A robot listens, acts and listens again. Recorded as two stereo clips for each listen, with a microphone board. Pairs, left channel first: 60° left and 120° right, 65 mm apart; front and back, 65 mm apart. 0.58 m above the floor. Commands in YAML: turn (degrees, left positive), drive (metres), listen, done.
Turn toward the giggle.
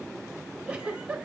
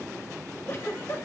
turn: -50
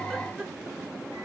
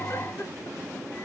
listen: true
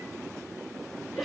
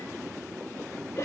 turn: -30
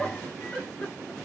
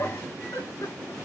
turn: -10
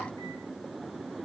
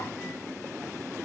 listen: true
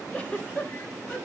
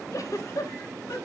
done: "Found it: a giggle, straight ahead."